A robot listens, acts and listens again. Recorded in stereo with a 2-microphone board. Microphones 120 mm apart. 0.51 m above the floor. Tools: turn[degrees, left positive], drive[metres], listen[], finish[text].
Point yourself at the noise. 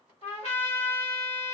Thought: The trumpet: about 65° left or 115° left.
Action: turn[65]
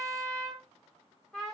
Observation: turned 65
Action: finish[Found it: a trumpet, straight ahead.]